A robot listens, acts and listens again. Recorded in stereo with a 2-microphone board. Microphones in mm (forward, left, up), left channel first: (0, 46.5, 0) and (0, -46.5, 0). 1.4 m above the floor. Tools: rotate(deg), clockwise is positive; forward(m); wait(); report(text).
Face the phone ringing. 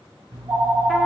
rotate(75)
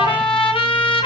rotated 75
wait()
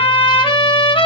wait()
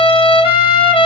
report("I heard a phone ringing, but can't make it out now. It was about straight ahead or 30° right.")